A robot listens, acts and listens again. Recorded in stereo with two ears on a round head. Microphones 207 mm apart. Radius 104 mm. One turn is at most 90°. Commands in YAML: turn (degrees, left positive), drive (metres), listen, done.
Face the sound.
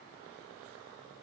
listen: true
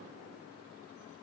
listen: true
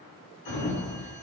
turn: 50
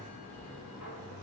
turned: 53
turn: 75
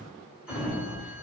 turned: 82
done: "Found it: a sliding door, straight ahead."